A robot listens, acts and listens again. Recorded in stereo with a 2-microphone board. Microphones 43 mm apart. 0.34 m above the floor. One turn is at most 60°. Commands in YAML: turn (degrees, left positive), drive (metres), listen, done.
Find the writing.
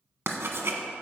turn: -60
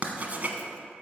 turn: -40
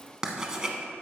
turn: -15
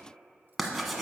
done: "Facing the writing."